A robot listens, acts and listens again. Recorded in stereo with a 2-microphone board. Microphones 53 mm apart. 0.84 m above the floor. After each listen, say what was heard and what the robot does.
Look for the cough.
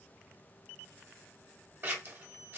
Keep listening.
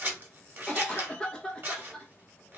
Turn 30° left.
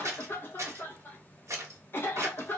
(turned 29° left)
So it is at 135° left. Turn 135° left.
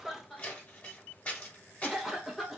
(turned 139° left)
Found it: a cough, straight ahead, under 1 m away.